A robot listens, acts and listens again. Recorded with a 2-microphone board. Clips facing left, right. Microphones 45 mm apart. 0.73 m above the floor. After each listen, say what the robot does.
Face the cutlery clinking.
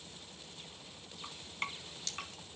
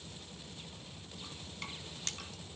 Turn 45° right.
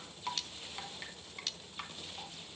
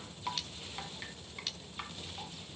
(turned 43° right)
Facing the cutlery clinking, under 1 m away.